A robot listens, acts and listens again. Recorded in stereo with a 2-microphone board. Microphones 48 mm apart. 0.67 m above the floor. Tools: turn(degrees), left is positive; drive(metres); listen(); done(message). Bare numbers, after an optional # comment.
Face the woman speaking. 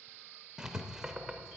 listen()
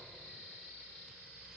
listen()
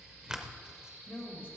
# The woman speaking: about 55° left or 125° left.
turn(55)
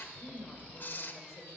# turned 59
# So it is at 70° left.
turn(70)
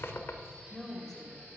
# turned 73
done("Facing the woman speaking, 2 to 4 m away.")